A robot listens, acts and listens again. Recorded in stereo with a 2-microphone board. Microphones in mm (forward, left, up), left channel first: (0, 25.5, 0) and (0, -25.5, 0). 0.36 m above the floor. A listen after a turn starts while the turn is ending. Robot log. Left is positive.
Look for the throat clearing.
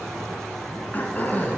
note: The throat clearing: about 35° left or 145° left.
cmd yaw +35
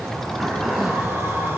end: Found it: throat clearing, straight ahead.